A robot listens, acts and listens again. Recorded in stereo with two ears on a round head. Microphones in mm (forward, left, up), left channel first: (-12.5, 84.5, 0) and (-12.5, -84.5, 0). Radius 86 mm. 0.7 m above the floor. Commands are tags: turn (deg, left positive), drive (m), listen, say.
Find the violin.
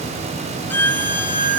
<turn deg="30"/>
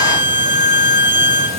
<turn deg="-15"/>
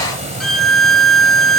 <say>Found it: a violin, straight ahead, under 1 m away.</say>